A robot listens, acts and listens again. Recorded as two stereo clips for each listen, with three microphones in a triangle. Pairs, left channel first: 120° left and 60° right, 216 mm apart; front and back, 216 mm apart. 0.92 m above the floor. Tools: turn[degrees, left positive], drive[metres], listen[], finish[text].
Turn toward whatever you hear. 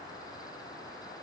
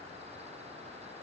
Action: listen[]
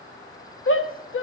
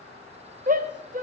Thought: The shout: 130° left.
Action: turn[130]
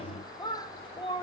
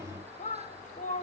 Thought: The shout is now 50° left.
Action: turn[50]
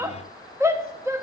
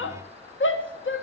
Thought: The shout is now 20° left.
Action: turn[20]
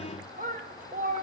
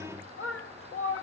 Thought: The shout is now 10° right.
Action: turn[-10]
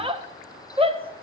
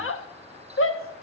Action: finish[Found it: a shout, straight ahead, under 1 m away.]